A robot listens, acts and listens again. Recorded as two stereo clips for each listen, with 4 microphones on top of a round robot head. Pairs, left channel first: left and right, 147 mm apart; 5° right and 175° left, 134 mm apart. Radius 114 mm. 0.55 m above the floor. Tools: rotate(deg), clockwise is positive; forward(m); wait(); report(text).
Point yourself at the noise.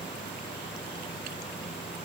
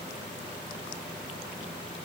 wait()
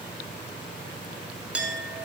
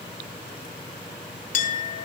report("Found it: a clink, straight ahead.")